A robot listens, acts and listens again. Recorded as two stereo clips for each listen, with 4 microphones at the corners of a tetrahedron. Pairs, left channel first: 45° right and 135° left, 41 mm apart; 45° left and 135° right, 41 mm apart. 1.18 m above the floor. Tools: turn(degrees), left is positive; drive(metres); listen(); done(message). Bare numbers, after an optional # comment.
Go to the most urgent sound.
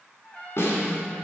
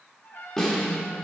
listen()
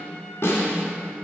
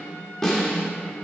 listen()
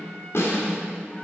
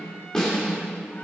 done("I can't make out anything urgent, only a snare drum and a trumpet.")